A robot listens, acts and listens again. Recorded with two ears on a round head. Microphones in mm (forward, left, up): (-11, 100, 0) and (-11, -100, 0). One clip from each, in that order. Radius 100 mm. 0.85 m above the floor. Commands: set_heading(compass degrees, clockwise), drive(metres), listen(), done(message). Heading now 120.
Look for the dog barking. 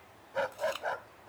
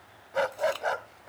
set_heading(155)
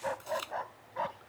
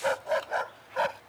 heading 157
set_heading(257)
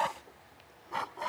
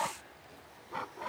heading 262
set_heading(227)
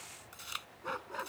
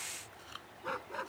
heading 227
set_heading(217)
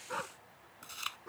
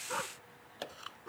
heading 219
done("Facing the dog barking.")